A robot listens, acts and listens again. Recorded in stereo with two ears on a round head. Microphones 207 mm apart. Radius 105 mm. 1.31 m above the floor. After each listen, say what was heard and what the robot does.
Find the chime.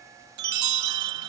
Turn 90° right.
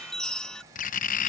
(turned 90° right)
Found it: a chime, straight ahead.